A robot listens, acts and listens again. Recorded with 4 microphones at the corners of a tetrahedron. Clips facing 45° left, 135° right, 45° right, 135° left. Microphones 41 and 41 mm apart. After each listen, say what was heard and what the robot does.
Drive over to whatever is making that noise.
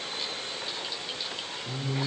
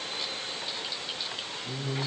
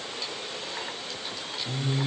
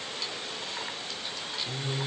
The singing: 170° right. Turn 170° right.
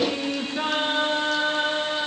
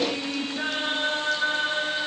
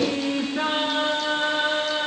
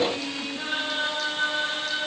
Drive 1.0 m forward.
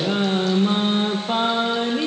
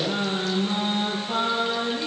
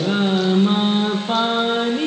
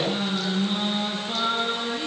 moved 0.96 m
Drive 1.0 m forward.
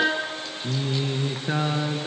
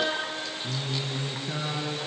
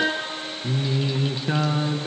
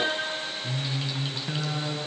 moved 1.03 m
The singing is now 10° left. Turn 10° left.
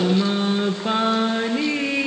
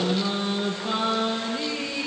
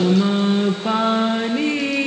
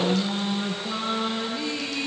Drive 1.0 m forward.
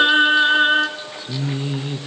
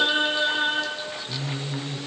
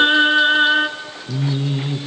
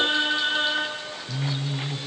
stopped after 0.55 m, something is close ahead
I am next to the singing.